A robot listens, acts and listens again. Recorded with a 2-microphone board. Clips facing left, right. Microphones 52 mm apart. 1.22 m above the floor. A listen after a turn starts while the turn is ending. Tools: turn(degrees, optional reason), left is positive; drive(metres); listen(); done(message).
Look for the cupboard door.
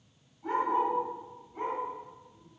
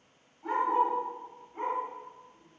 listen()
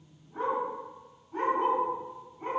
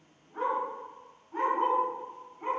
listen()
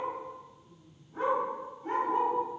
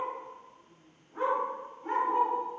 done("I can't make out a cupboard door to turn to.")